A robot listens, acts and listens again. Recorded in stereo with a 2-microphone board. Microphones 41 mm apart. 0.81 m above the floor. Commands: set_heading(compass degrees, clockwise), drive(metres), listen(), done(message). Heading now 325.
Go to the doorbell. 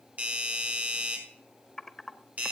set_heading(5)
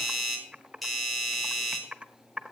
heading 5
drive(1.0)
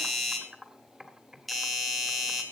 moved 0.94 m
drive(1.0)
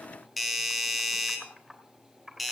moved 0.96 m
drive(1.0)
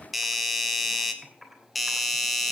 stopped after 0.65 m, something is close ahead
done("Arrived at the doorbell, straight ahead.")